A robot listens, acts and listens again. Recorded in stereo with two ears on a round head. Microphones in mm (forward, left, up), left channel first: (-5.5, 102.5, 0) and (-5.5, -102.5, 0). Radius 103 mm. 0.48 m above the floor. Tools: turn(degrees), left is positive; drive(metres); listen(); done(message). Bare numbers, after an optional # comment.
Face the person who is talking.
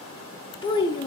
# The child speaking: about 20° left or 160° left.
turn(20)
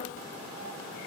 listen()
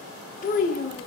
# So it is at 135° left.
turn(135)
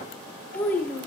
# The child speaking is now 10° left.
turn(10)
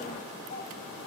listen()
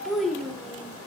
done("Found it: a child speaking, straight ahead, under 1 m away.")